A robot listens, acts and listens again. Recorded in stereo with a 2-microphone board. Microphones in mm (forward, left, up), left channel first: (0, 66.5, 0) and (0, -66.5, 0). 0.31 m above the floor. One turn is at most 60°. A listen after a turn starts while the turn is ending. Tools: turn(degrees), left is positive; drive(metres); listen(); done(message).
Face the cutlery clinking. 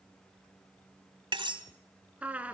turn(degrees=-40)
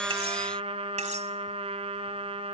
listen()
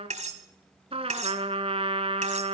turn(degrees=-60)
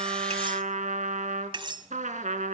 turn(degrees=-45)
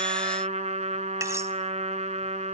listen()
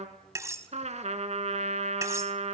turn(degrees=-25)
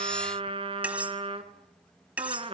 turn(degrees=-10)
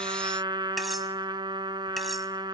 listen()
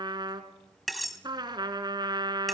done("Facing the cutlery clinking, 1 to 2 m away.")